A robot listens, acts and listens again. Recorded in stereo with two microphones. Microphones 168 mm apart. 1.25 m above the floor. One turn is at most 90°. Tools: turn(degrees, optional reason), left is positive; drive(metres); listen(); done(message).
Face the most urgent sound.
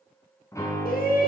turn(degrees=70, reason="The shout: about 70° left or 110° left.")
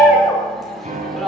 done("Facing the shout, over 4 m away.")